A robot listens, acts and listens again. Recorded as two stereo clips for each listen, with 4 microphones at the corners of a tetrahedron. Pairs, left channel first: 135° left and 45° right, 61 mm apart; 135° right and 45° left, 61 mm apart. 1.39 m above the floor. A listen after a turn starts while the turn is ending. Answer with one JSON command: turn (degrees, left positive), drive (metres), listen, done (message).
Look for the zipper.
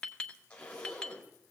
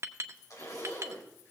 {"turn": -155}
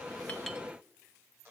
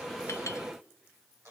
{"turn": 15}
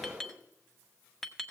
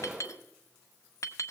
{"listen": true}
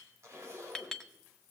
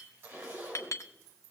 {"done": "Found it: a zipper, straight ahead, 2 to 4 m away."}